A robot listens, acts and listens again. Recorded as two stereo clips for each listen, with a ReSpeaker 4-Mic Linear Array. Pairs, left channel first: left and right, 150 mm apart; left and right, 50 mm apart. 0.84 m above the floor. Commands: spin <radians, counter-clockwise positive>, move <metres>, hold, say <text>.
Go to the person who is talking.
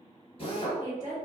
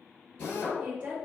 spin -0.44
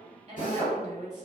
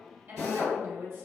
spin -2.18
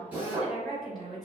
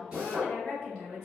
move 1.0
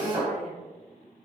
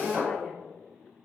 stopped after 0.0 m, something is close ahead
hold
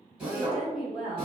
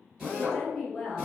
say Blocked. The woman speaking is further on, straight ahead.